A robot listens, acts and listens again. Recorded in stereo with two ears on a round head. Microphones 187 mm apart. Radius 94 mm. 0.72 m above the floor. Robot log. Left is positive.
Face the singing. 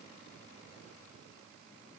cmd idle
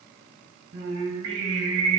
note: The singing: about 75° right or 105° right.
cmd yaw -75
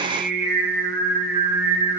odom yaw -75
note: So it is at 10° right.
cmd yaw -10
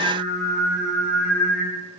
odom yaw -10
end: Found it: singing, straight ahead.